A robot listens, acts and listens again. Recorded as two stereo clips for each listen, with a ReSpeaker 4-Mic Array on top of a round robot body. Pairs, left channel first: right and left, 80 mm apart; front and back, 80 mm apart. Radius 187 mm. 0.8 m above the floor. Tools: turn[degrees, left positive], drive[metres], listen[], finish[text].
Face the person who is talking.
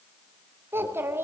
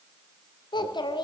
Thought: The child speaking: 25° left.
Action: turn[25]
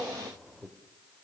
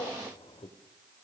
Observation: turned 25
Action: finish[Found it: a child speaking, straight ahead.]